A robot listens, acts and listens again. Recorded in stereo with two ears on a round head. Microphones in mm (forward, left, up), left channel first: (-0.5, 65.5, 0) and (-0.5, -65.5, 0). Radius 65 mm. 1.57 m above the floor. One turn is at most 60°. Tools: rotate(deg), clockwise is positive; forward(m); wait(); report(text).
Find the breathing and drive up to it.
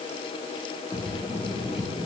rotate(-30)
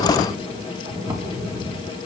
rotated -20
rotate(20)
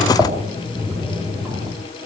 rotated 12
forward(1.0)
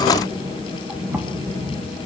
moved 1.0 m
rotate(10)
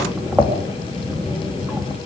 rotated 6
forward(1.0)
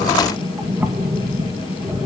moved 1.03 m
rotate(10)
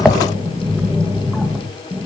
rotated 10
forward(1.0)
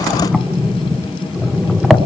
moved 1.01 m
forward(1.0)
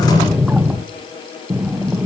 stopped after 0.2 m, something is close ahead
report("Arrived at the breathing, straight ahead.")